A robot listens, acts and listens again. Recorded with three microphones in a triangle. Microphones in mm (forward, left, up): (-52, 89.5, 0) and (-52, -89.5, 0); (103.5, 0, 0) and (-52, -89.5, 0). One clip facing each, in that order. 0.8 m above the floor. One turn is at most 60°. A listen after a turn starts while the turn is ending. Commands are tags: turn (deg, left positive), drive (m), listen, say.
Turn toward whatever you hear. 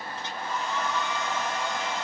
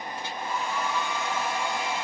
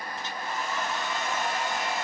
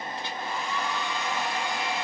<turn deg="-10"/>
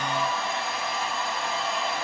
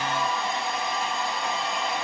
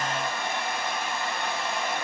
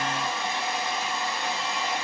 <say>Facing the hair dryer, 1 to 2 m away.</say>